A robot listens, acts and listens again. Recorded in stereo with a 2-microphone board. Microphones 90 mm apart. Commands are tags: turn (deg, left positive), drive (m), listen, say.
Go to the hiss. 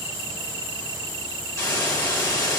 <turn deg="35"/>
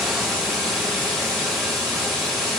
<drive m="1.0"/>
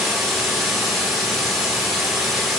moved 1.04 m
<drive m="1.0"/>
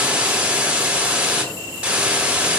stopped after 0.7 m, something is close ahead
<turn deg="-15"/>
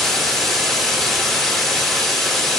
<say>Arrived at the hiss, straight ahead.</say>